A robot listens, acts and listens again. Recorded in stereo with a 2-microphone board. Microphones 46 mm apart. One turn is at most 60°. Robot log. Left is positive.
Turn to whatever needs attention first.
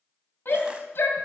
note: The shout: about 60° left or 120° left.
cmd yaw +60
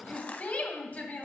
note: So it is at 45° left.
cmd yaw +45
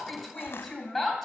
note: The shout is now 10° left.
cmd yaw +10
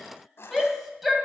end: Facing the shout, 2 to 4 m away.